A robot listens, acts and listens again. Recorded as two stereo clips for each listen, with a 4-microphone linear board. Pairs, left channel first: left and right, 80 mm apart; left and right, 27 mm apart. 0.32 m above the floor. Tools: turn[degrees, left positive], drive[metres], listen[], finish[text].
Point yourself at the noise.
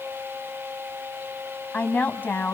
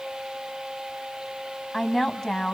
Thought: The woman speaking: about 25° left or 155° left.
Action: turn[25]
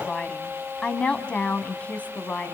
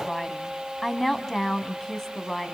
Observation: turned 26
Thought: The woman speaking: about 20° left or 160° left.
Action: turn[20]
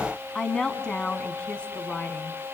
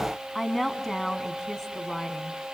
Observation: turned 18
Action: turn[30]
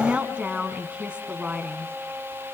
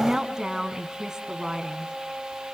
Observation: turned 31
Thought: So it is at 15° right.
Action: turn[-15]
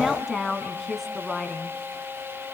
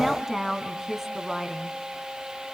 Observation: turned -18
Action: finish[Found it: a woman speaking, straight ahead.]